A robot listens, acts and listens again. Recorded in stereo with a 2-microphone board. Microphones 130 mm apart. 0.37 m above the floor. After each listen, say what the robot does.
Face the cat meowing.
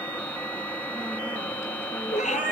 Turn 70° left.
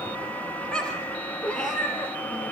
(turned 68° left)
Turn 10° left.
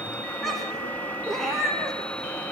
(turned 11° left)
Facing the cat meowing, over 4 m away.